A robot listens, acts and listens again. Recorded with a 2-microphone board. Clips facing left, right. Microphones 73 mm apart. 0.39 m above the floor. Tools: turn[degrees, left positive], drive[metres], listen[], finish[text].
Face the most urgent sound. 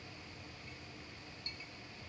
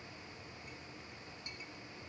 Action: listen[]
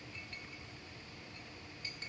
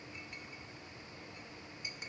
Action: listen[]
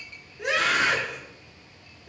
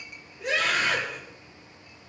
Action: turn[90]
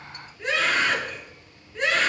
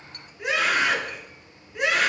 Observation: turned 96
Thought: So it is at 10° right.
Action: turn[-10]
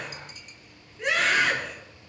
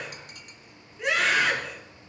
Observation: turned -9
Action: finish[Found it: a scream, straight ahead.]